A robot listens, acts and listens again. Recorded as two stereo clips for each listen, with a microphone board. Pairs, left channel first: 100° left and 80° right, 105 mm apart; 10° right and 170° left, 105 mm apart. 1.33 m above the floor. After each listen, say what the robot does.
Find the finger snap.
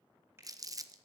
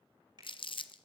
Turn 145° right.
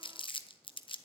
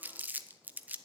Keep listening.
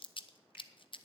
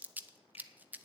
Keep listening.
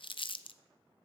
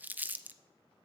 Turn 15° right.
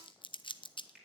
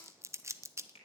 Found it: a finger snap, straight ahead.